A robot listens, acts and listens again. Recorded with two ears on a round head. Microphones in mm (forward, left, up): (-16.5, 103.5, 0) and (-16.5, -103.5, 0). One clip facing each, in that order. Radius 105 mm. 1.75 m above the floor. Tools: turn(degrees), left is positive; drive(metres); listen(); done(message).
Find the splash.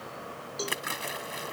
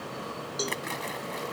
turn(degrees=30)
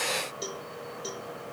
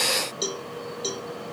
listen()
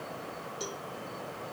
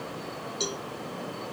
done("I heard a splash, but can't make it out now. It was about 20° right or 140° left.")